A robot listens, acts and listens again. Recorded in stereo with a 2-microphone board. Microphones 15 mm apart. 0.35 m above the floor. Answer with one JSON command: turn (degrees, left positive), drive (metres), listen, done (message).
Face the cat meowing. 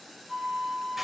{"listen": true}
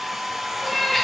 {"turn": 15}
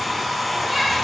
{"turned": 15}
{"listen": true}
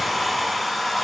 {"listen": true}
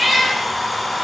{"done": "Facing the cat meowing."}